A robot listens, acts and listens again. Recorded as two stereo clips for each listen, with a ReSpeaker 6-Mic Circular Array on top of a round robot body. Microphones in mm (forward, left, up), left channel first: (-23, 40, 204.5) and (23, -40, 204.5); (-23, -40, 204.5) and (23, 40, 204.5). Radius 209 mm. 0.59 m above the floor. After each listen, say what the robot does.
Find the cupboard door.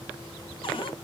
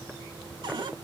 Turn 100° left.
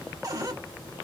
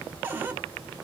Turn 10° right.
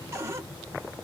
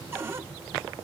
Facing the cupboard door, 1 to 2 m away.